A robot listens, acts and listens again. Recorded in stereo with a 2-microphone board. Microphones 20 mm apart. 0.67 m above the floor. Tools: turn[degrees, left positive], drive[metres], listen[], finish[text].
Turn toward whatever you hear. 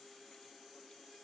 Action: listen[]
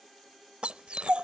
Thought: The dog barking: about 70° right or 110° right.
Action: turn[-70]
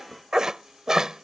Thought: So it is at 30° right.
Action: turn[-30]
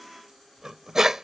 Thought: The dog barking is now 25° right.
Action: turn[-25]
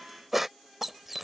Thought: The dog barking is now 10° right.
Action: turn[-10]
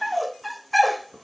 Action: finish[Facing the dog barking.]